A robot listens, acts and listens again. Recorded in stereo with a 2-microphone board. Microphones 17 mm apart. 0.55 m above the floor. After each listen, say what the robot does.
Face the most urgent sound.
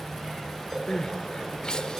Turn 50° left.
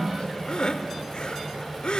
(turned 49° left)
Turn 75° left.
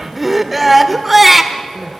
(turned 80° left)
Facing the crying, 1 to 2 m away.